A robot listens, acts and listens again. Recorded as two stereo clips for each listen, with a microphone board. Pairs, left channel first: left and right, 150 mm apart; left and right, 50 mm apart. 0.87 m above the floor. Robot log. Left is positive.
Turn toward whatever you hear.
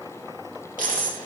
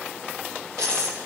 note: The dropped coin: about 65° right or 115° right.
cmd yaw -65
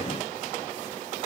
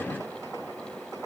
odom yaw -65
cmd idle
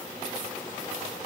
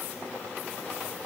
end: I heard a dropped coin, but can't make it out now. It was about straight ahead or 50° right.